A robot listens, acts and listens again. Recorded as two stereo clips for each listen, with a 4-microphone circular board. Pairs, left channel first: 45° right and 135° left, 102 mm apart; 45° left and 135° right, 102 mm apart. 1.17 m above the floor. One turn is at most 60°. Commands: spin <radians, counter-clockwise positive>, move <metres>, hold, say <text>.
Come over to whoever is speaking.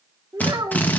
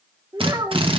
spin -1.05
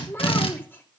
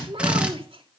spin -1.05
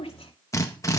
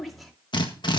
spin -0.79
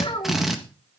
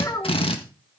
spin -0.17
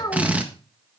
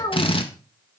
move 1.0
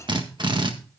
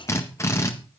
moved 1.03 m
hold
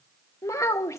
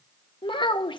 spin 0.26
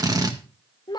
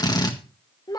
move 1.0
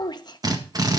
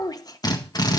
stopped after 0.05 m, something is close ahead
say I am next to the child speaking.